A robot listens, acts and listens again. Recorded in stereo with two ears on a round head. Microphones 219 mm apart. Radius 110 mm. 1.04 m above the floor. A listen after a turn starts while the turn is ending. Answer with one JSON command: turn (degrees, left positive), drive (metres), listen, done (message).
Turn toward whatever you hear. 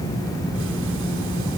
{"listen": true}
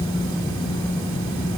{"listen": true}
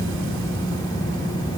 {"done": "I can't make out anything to turn to."}